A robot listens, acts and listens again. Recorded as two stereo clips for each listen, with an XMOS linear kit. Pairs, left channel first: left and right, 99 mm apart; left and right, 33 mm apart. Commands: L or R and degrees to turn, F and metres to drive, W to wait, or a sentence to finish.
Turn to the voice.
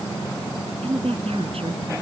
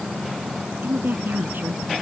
R90
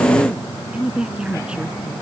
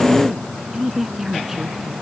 R10
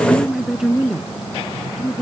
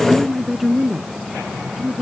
Facing the woman speaking.